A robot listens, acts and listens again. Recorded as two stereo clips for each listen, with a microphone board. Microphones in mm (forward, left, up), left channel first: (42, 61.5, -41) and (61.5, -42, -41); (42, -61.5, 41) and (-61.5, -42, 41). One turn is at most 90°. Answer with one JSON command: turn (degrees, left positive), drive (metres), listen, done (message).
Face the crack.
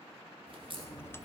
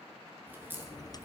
{"turn": -90}
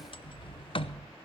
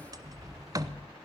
{"turn": -30}
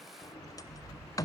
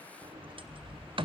{"done": "I heard a crack from this way, but can't make it out now."}